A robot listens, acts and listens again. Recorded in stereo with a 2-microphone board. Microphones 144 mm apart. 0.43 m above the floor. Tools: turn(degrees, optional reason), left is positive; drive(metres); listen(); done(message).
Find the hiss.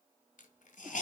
turn(degrees=65, reason="The hiss: about 65° left or 115° left.")
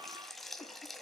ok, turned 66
done("Facing the hiss, 1 to 2 m away.")